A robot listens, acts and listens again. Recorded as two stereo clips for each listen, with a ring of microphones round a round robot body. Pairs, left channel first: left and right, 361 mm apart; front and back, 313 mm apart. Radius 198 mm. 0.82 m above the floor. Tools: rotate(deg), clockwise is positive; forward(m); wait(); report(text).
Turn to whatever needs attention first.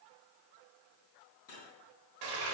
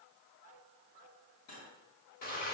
wait()
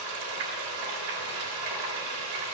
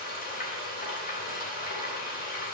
wait()
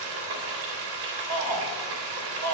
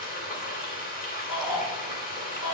rotate(25)
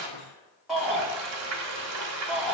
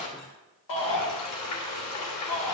report("Facing the shout, 2 to 4 m away.")